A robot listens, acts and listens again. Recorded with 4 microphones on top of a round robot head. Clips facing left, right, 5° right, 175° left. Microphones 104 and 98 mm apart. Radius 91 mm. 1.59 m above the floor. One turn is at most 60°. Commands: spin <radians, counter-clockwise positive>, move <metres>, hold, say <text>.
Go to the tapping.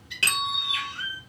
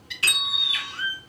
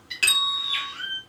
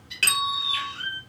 spin 1.05
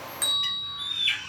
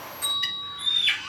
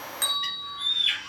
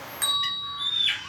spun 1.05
spin 0.17
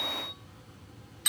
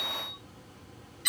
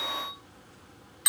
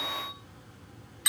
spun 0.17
hold
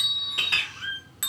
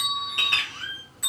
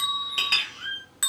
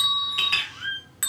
say I heard tapping from this way, but can't make it out now. I did not reach it.